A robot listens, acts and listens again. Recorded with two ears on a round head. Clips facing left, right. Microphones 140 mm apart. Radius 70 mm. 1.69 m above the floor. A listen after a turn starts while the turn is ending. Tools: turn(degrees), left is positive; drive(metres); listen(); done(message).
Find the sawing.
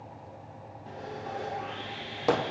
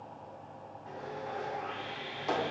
turn(degrees=35)
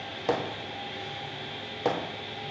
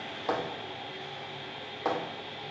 turn(degrees=110)
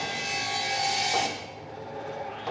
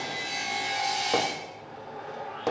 turn(degrees=30)
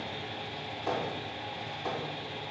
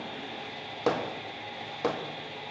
done("Facing the sawing, 2 to 4 m away.")